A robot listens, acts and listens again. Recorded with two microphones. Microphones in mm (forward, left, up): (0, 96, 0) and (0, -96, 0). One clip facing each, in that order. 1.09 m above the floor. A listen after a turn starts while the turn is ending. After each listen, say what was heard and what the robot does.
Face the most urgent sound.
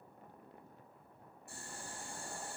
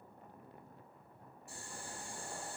Keep listening.
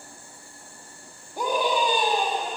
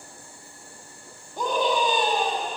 Turn 30° left.
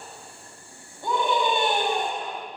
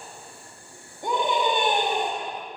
So it is at 20° right. Turn 20° right.
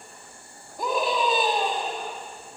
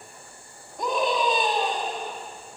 Facing the scream.